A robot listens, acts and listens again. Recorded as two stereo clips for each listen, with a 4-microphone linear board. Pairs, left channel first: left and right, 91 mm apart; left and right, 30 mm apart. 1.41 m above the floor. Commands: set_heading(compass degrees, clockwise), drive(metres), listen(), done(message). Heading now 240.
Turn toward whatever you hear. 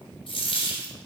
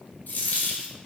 set_heading(150)
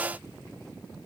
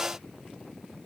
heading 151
done("Facing where the dropped coin came from. I can't hear it now.")